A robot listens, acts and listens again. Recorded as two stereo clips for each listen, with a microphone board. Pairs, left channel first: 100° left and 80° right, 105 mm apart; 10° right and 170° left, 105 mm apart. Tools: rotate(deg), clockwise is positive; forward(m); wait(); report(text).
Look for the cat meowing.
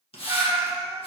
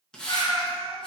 rotate(30)
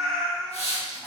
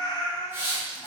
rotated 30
rotate(-20)
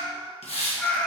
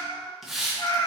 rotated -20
rotate(-30)
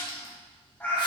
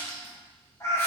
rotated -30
rotate(-40)
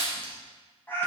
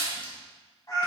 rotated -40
rotate(-35)
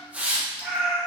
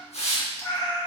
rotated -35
report("Found it: a cat meowing, straight ahead, 2 to 4 m away.")